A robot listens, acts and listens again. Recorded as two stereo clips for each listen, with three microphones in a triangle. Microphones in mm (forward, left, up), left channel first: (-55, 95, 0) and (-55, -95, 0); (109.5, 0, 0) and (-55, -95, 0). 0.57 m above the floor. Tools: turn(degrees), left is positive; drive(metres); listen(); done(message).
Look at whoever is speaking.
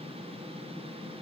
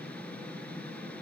listen()
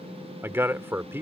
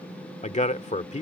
turn(degrees=-15)
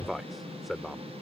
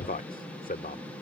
done("Found it: a man speaking, straight ahead.")